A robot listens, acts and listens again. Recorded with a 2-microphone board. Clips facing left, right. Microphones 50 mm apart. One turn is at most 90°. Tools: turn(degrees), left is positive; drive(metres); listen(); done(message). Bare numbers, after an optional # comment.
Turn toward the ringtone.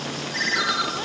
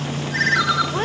turn(-30)
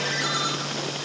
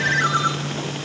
# So it is at 145° right.
turn(-90)
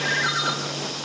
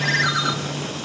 # The ringtone is now 75° right.
turn(-75)
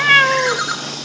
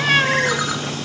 # The ringtone is now 25° right.
turn(-25)
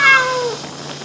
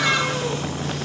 listen()
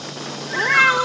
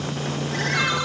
listen()
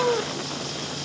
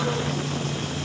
done("I heard a ringtone from this way, but can't make it out now.")